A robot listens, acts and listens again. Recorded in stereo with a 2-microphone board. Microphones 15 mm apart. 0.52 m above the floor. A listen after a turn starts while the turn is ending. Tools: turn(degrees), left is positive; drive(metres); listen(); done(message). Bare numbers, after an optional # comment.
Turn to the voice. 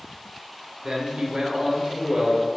# The man speaking: about 40° right or 140° right.
turn(-40)
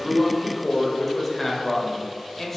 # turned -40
# So it is at 20° left.
turn(20)
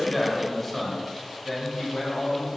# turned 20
# The man speaking is now 15° left.
turn(15)
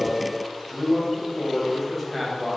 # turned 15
done("Facing the man speaking.")